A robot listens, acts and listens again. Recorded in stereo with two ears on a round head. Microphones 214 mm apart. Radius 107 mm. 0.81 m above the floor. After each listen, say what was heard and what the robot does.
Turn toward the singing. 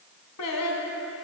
Turn 90° left.
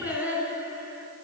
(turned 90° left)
Found it: singing, straight ahead, 2 to 4 m away.